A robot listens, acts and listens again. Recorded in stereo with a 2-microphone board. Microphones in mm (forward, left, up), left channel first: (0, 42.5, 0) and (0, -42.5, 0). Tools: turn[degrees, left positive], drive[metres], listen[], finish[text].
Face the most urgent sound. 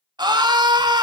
Thought: The scream: about 55° right or 125° right.
Action: turn[-55]
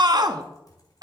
Thought: So it is at 60° right.
Action: turn[-60]
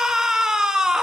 Thought: The scream is now 10° right.
Action: turn[-10]
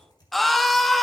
Action: finish[Found it: a scream, straight ahead.]